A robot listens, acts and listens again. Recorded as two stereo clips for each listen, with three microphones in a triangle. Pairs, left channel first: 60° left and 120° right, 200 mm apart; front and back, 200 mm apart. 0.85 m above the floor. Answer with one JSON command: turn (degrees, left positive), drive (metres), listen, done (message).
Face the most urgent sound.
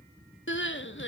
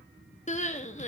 {"turn": 55}
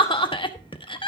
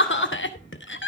{"done": "Found it: crying, straight ahead, 1 to 2 m away."}